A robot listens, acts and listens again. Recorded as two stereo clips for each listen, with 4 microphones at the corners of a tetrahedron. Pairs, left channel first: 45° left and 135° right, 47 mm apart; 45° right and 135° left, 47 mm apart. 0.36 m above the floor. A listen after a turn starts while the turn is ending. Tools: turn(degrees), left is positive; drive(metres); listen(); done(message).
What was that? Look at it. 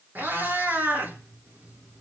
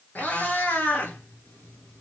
turn(degrees=-90)
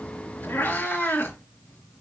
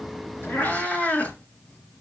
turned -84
turn(degrees=10)
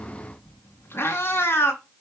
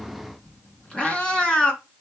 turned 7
turn(degrees=25)
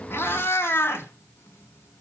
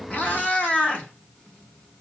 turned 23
turn(degrees=20)
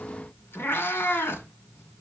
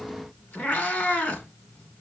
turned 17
done("Facing the cat meowing.")